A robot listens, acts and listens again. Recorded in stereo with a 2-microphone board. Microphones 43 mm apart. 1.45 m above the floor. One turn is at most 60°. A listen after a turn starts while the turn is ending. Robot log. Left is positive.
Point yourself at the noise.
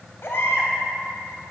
note: The baby crying: about 60° left or 120° left.
cmd yaw +60
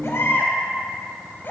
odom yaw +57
note: So it is at 55° left.
cmd yaw +55
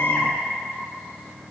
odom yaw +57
cmd idle
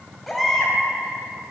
end: Found it: a baby crying, straight ahead, 2 to 4 m away.